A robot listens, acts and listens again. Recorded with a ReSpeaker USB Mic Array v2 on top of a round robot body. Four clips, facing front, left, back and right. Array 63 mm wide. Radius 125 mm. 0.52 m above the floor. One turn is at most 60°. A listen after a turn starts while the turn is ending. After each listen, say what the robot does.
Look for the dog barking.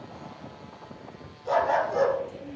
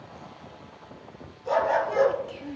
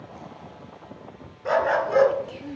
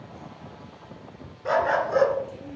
Turn 60° right.
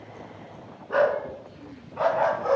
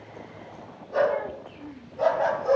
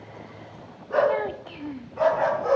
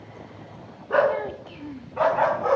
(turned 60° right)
Turn 60° right.
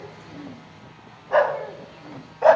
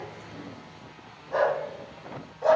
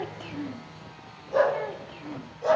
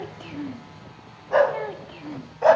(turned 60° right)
Turn 25° right.
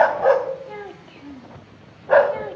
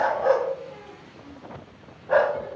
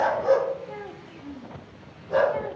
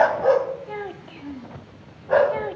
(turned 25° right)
Facing the dog barking, 1 to 2 m away.